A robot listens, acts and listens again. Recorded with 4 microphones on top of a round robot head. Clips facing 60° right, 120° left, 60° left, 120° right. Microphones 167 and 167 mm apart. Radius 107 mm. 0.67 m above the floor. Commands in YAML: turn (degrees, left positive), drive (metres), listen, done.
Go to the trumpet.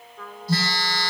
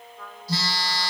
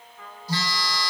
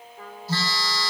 turn: -65
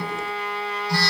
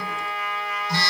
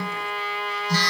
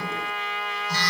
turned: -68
drive: 1.0
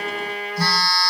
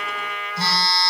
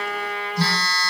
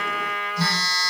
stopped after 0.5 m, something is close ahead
done: "Blocked. The trumpet is further on, straight ahead."